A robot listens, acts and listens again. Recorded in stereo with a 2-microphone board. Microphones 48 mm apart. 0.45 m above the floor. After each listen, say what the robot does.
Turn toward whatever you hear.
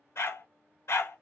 Turn 60° left.
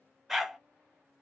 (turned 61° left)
Found it: a dog barking, straight ahead, under 1 m away.